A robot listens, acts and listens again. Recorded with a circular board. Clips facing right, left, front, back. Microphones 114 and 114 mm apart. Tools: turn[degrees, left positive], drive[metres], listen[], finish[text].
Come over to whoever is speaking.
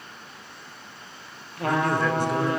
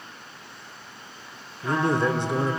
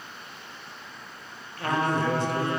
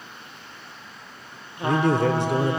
Thought: The man speaking: 155° left.
Action: turn[155]
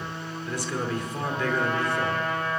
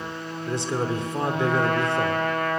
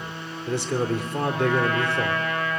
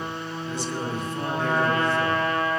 Thought: The man speaking is now 25° left.
Action: turn[25]
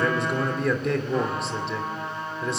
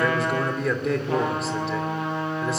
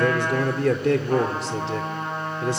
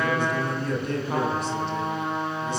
Action: drive[1.0]
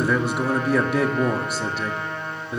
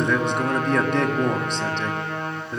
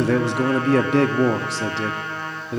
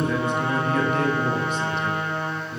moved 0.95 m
Action: drive[1.0]
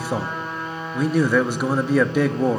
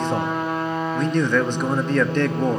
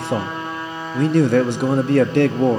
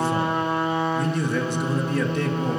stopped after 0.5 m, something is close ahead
Thought: The man speaking is now 10° right.
Action: turn[-10]
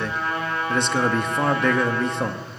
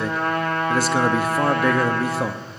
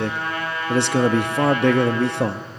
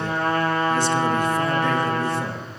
Action: finish[Arrived at the man speaking, straight ahead.]